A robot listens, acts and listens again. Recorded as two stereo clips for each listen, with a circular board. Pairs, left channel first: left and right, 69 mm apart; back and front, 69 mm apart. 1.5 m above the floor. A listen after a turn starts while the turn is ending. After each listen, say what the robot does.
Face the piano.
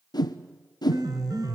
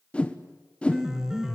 Turn 80° right.
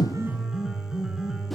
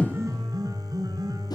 Turn 10° right.
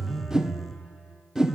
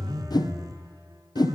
Found it: a piano, straight ahead.